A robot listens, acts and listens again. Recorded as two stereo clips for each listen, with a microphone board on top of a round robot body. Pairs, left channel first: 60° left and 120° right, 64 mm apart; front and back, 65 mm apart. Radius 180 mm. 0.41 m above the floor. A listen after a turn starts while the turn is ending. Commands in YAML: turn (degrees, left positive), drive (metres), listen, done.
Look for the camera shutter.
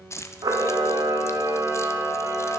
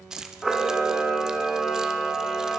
turn: -90
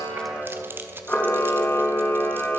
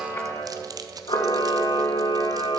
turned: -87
done: "Found it: a camera shutter, straight ahead, 1 to 2 m away."